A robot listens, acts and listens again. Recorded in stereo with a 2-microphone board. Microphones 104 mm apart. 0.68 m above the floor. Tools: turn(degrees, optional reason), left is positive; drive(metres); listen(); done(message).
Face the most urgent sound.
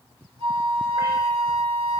listen()
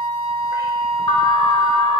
turn(degrees=55, reason="The alarm: about 55° left or 125° left.")
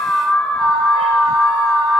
turn(degrees=15, reason="So it is at 15° left.")
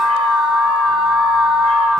done("Facing the alarm, under 1 m away.")